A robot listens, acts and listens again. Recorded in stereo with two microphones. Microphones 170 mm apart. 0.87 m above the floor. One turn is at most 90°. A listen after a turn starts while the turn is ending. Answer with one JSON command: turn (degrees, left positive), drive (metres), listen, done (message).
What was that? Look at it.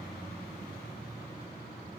{"listen": true}
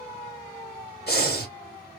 {"turn": 75}
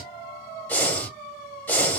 {"turn": 10}
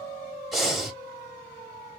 {"done": "Found it: breathing, straight ahead."}